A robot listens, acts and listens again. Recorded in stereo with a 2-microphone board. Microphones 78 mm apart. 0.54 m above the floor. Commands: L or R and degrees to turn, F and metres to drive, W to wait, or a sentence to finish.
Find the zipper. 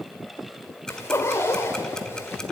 L30
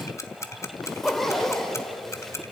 Facing the zipper.